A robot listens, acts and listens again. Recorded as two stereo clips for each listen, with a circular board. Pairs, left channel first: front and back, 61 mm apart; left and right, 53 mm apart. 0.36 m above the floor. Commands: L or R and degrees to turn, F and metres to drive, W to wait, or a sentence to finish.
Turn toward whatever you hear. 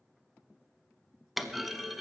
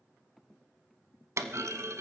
R90
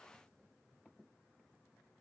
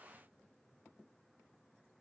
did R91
I heard a clunk from this way, but can't make it out now.